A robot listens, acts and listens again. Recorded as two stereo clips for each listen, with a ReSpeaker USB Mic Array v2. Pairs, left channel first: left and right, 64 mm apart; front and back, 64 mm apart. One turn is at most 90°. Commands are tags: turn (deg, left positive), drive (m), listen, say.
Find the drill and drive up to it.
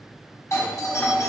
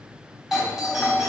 <listen/>
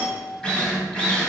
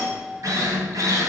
<turn deg="90"/>
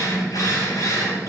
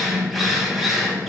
<turn deg="85"/>
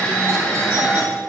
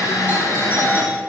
<turn deg="20"/>
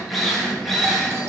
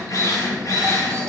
<drive m="1.0"/>
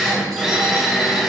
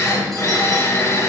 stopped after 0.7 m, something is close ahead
<turn deg="-10"/>
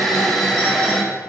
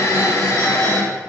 <say>Arrived at the drill, straight ahead.</say>